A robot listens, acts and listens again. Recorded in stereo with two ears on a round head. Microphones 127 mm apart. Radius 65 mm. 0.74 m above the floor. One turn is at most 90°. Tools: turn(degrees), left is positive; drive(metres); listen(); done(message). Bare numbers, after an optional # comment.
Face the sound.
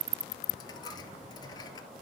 # The dropped coin: about 30° left or 150° left.
turn(30)
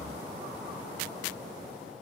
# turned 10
listen()
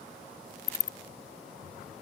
done("I heard a dropped coin, but can't make it out now. It was about 20° left or 140° left.")